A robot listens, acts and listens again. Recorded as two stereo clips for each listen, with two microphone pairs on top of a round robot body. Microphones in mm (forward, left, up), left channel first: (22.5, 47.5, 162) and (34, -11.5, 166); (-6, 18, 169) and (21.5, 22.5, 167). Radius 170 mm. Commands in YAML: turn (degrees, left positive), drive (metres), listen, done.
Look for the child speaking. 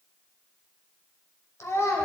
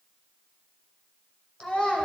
turn: 140
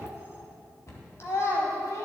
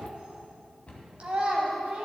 turn: 60
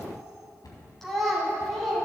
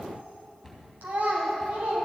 turn: 15
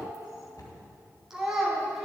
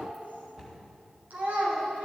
done: "Facing the child speaking, 2 to 4 m away."